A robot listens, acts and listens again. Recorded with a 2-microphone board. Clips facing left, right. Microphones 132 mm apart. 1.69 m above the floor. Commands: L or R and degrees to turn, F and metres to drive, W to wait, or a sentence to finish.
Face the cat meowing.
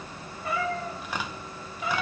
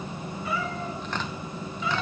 L45
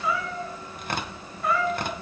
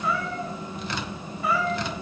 Found it: a cat meowing, straight ahead, 2 to 4 m away.